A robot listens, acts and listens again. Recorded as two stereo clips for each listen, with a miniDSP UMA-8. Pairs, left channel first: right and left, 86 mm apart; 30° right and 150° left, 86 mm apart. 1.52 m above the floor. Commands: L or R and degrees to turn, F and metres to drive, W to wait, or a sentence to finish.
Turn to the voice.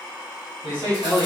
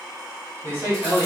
L90
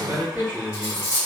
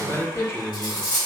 L20
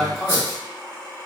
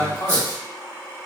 Found it: a man speaking, straight ahead, 1 to 2 m away.